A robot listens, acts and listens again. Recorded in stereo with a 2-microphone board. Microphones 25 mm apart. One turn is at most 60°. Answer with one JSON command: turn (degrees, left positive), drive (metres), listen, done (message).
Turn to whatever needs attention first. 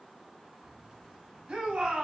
{"turn": -50}
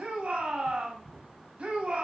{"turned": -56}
{"turn": -60}
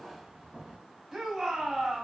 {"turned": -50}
{"turn": -20}
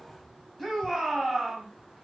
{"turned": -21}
{"done": "Facing the shout, 2 to 4 m away."}